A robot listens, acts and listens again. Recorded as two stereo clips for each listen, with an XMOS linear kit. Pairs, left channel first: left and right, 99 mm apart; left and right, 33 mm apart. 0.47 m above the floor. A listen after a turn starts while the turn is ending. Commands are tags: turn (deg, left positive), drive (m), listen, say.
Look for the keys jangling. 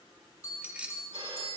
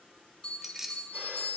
<turn deg="-30"/>
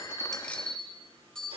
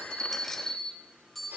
<listen/>
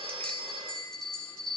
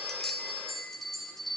<listen/>
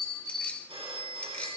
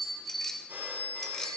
<say>I heard keys jangling, but can't make it out now. It was about 15° left or 135° right.</say>